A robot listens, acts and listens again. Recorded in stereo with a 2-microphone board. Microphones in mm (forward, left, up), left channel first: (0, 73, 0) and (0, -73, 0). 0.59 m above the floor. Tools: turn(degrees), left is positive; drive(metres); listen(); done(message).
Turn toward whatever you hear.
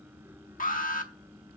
turn(degrees=65)
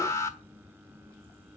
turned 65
turn(degrees=20)
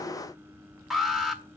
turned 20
done("Found it: an alarm, straight ahead, 1 to 2 m away.")